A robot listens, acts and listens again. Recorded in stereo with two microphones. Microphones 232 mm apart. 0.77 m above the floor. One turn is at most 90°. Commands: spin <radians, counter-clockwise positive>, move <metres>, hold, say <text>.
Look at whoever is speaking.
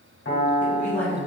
spin 0.52
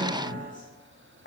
spin 1.57
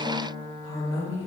spin 1.57
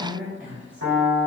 say Facing the woman speaking, 1 to 2 m away.